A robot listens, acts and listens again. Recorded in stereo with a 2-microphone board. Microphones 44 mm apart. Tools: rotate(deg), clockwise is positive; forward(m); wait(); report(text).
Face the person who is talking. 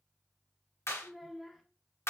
rotate(-30)
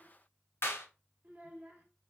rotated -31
rotate(30)
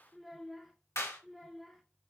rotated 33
report("Found it: a child speaking, straight ahead.")